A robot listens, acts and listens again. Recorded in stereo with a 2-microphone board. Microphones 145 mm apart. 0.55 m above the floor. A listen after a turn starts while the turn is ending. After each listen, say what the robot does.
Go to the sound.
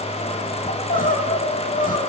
Turn 70° left.
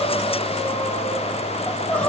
Drive 1.0 m forward.
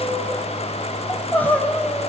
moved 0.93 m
Turn 10° left.
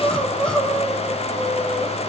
Drive 1.0 m forward.
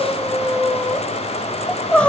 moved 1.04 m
Turn 10° left.
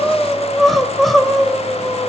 Drive 1.0 m forward.
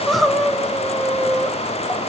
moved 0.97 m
Drive 1.0 m forward.
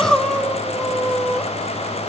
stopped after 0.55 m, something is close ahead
I am next to the crying.